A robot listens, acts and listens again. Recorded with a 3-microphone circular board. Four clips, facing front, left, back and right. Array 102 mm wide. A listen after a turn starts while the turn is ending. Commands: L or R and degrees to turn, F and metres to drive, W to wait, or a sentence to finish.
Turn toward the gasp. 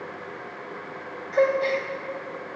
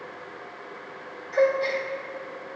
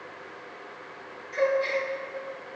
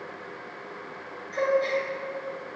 L35
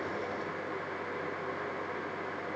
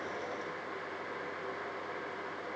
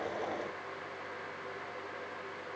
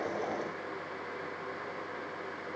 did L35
Facing where the gasp came from. I can't hear it now.